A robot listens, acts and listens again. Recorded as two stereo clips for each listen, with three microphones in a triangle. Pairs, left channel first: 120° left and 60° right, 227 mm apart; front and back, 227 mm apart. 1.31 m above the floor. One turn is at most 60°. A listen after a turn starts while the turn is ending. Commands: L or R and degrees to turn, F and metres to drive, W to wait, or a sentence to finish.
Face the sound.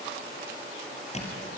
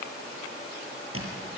L60
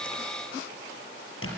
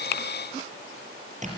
L60
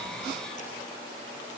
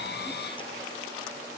L60
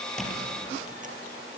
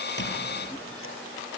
W
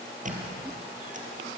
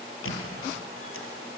Found it: a squeak, straight ahead, over 4 m away.